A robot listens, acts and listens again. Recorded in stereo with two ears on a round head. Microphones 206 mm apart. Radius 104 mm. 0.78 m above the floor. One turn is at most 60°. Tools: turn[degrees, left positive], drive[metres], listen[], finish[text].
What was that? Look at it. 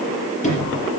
Thought: The sliding door: about 35° left or 145° left.
Action: turn[35]
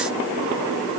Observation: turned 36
Action: listen[]
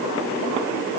Action: listen[]
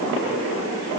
Action: finish[I heard a sliding door, but can't make it out now. It was about straight ahead or 110° left.]